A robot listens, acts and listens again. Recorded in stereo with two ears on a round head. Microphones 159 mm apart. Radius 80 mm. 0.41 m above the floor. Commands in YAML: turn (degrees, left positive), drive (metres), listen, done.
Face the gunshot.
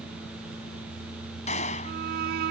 turn: 40
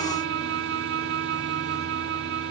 listen: true
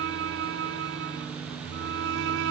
done: "I heard a gunshot, but can't make it out now. It was about straight ahead or 100° left."